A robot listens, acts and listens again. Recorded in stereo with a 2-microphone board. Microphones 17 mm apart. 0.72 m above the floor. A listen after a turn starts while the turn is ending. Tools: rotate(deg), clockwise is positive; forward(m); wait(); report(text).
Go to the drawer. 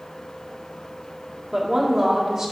wait()
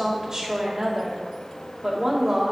wait()
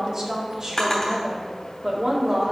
rotate(-25)
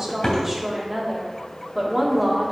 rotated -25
wait()
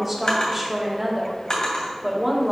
rotate(-130)
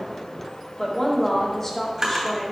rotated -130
rotate(30)
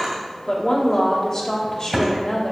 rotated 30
rotate(10)
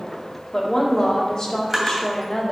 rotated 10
forward(1.0)
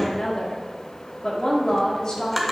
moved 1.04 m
forward(1.0)
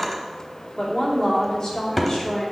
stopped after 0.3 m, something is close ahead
report("I am next to the drawer.")